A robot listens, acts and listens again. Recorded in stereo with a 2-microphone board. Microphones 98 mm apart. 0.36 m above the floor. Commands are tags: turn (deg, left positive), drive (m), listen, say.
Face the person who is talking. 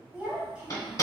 <turn deg="-30"/>
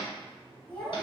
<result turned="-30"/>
<turn deg="20"/>
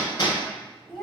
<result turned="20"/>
<say>Facing the child speaking.</say>